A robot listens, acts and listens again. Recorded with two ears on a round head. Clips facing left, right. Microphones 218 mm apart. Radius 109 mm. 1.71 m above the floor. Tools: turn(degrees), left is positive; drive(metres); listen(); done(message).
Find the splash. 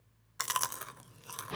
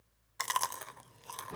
listen()
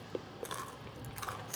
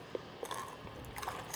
turn(degrees=-50)
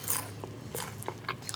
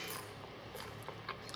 listen()
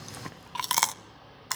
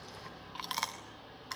done("I heard a splash, but can't make it out now. It was about straight ahead or 80° right.")